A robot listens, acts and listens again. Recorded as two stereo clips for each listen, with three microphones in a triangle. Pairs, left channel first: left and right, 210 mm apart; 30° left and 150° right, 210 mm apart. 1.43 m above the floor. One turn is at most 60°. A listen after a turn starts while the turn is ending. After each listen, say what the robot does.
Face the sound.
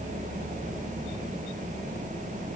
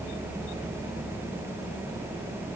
Keep listening.
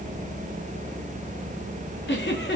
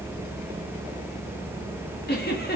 Turn 60° left.
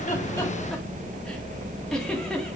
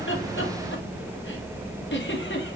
Facing the giggle, 1 to 2 m away.